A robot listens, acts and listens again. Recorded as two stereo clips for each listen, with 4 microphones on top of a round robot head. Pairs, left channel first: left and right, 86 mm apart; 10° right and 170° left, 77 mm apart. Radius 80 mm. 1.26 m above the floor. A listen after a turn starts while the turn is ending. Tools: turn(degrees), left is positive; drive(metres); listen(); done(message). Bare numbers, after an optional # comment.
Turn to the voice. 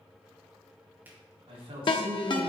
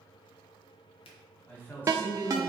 # The man speaking: 75° right.
turn(-75)
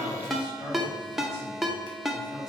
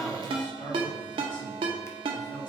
listen()
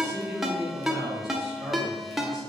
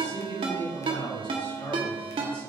done("Facing the man speaking, 2 to 4 m away.")